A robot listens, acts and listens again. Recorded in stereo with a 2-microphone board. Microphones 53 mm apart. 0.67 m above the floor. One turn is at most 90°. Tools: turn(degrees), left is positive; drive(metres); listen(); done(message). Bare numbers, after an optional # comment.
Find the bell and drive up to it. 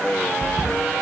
# The bell: about 55° left or 125° left.
turn(55)
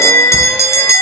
# So it is at 70° left.
turn(70)
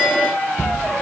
drive(1.0)
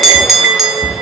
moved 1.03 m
drive(1.0)
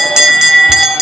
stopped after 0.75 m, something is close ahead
# The bell is now 15° right.
turn(-15)
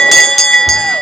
done("I am next to the bell.")